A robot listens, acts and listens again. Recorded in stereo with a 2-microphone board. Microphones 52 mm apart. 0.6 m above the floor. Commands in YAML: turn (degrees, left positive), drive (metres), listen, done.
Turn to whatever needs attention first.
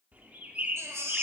turn: -70
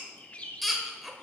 done: "Facing the baby crying, 1 to 2 m away."